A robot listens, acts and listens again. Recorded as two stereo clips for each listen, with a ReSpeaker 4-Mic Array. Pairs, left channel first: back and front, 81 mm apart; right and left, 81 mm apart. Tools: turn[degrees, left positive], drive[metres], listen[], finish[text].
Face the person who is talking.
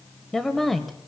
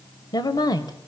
Thought: The woman speaking: 90° right.
Action: turn[-90]
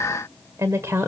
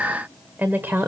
Thought: The woman speaking is now 40° left.
Action: turn[40]
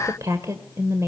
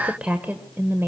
Thought: The woman speaking is now 40° left.
Action: turn[40]
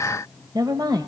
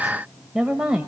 Thought: The woman speaking is now 15° left.
Action: turn[15]
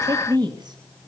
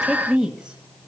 Thought: The woman speaking is now 10° left.
Action: turn[10]
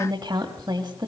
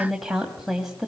Action: finish[Found it: a woman speaking, straight ahead, 2 to 4 m away.]